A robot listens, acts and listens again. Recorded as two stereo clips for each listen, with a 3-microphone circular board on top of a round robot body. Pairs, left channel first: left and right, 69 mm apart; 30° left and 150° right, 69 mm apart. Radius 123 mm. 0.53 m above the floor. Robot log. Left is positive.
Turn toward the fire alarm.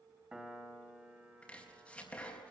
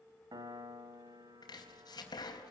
cmd idle
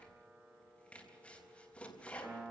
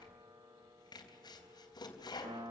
cmd idle
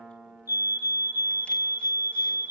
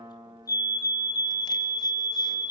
note: The fire alarm: 65° left.
cmd yaw +65
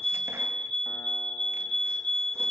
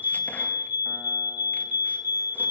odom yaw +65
note: The fire alarm is now 15° left.
cmd yaw +15
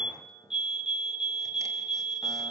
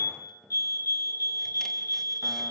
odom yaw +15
end: Found it: a fire alarm, straight ahead, 2 to 4 m away.